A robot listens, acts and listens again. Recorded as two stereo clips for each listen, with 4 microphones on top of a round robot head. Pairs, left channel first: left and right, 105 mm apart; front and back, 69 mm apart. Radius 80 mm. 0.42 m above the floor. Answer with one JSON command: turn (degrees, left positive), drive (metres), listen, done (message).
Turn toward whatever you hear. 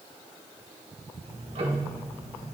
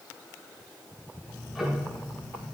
{"turn": -95}
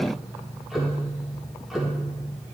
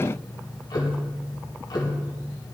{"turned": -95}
{"done": "Found it: ticking, straight ahead, 2 to 4 m away."}